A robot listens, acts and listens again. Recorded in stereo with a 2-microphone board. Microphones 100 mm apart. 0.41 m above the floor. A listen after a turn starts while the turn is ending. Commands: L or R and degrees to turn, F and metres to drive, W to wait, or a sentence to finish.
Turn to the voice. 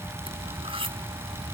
W
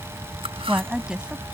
R30
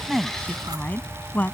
L15
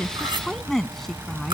Facing the woman speaking.